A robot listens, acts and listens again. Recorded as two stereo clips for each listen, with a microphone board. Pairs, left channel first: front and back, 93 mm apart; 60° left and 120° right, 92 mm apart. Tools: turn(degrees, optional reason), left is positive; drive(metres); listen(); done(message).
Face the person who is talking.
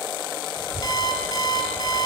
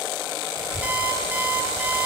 turn(degrees=-140, reason="The child speaking: 140° right.")
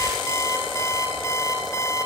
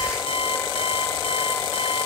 listen()
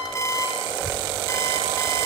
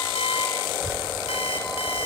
turn(degrees=-35, reason="The child speaking is now 35° right.")
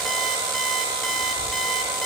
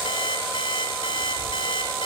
done("Found it: a child speaking, straight ahead.")